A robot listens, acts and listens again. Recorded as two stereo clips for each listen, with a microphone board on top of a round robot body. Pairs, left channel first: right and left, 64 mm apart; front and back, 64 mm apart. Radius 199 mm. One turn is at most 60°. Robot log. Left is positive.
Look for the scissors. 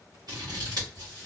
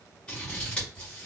note: The scissors: 75° left.
cmd yaw +60
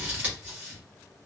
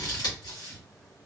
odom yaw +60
note: The scissors is now 25° left.
cmd yaw +25
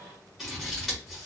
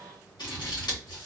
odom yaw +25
end: Found it: scissors, straight ahead.